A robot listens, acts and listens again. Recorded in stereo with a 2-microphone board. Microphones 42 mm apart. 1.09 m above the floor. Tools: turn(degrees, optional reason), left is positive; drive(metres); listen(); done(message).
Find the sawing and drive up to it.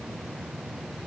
listen()
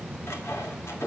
turn(degrees=90)
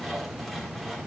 drive(metres=1.0)
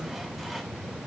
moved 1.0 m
listen()
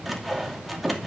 drive(metres=1.0)
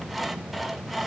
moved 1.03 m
drive(metres=1.0)
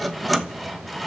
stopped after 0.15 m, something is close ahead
done("Arrived at the sawing, straight ahead.")